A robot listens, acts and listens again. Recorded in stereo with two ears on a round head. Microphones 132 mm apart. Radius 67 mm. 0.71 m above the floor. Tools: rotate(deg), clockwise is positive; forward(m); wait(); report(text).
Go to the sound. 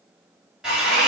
rotate(30)
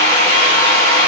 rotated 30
rotate(-25)
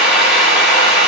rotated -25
forward(1.0)
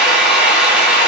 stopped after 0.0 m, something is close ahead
report("Something is in my way. I am facing the drill but have not reached it.")